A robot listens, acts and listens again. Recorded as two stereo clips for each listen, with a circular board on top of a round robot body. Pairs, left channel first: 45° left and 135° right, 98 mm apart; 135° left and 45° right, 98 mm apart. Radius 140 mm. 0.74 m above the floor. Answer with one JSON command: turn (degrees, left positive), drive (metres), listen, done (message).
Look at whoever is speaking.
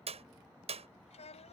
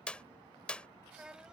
{"turn": 35}
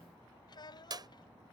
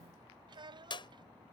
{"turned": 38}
{"done": "Facing the child speaking."}